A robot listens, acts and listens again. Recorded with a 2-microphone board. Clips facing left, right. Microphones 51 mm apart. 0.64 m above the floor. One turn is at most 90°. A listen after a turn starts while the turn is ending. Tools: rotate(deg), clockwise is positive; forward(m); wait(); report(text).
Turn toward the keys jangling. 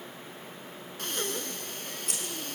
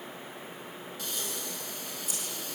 rotate(-60)
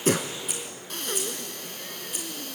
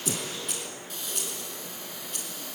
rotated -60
rotate(-10)
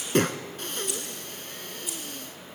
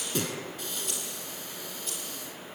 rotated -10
rotate(-10)
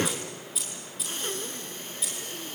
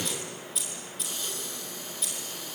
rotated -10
report("Found it: keys jangling, straight ahead.")